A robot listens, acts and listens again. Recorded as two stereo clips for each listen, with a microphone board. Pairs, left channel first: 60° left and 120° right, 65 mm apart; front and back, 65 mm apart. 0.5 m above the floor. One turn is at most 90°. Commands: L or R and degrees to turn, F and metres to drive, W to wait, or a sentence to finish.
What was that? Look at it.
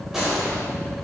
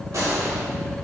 L90
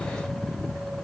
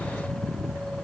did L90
L70
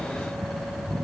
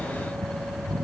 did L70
Facing where the gunshot came from. I can't hear it now.